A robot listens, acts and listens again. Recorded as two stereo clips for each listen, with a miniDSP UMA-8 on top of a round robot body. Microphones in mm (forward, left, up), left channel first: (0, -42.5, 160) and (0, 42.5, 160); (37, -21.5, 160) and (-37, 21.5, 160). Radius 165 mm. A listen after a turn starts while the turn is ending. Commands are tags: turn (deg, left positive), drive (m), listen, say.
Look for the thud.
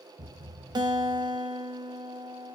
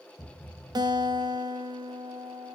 <turn deg="50"/>
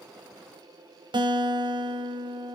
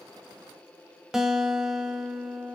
<say>I heard a thud from this way, but can't make it out now.</say>